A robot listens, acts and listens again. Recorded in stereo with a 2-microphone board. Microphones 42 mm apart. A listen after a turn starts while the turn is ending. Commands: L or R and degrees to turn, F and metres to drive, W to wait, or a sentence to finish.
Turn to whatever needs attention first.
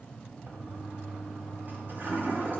W
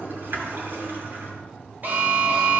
R45
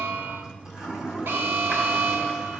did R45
R85
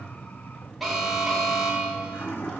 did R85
Facing the alarm.